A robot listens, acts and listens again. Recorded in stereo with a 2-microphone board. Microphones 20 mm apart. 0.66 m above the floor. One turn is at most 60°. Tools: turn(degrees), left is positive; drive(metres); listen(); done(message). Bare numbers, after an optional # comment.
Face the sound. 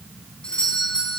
# The doorbell: about 65° left or 115° left.
turn(60)
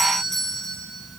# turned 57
# So it is at 10° left.
turn(10)
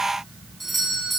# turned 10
done("Found it: a doorbell, straight ahead.")